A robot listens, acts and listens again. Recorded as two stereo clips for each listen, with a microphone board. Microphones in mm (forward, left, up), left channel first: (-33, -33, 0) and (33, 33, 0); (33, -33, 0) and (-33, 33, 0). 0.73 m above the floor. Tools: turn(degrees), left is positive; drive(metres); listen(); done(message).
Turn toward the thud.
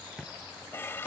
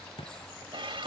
turn(degrees=-40)
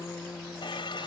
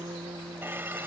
done("Facing where the thud came from. I can't hear it now.")